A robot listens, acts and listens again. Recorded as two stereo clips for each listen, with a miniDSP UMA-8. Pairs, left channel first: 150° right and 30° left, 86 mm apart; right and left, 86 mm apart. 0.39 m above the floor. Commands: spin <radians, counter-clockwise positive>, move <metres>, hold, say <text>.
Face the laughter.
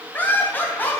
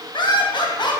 spin -1.48
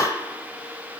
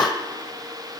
spin -0.26
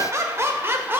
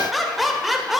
say Found it: laughter, straight ahead, 1 to 2 m away.